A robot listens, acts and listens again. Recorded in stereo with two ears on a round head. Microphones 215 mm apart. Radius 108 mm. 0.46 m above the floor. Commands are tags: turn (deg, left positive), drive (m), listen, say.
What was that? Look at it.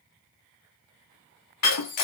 <turn deg="70"/>
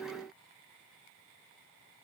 <listen/>
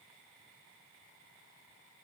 <say>I heard breaking glass, but can't make it out now. It was about straight ahead or 40° left.</say>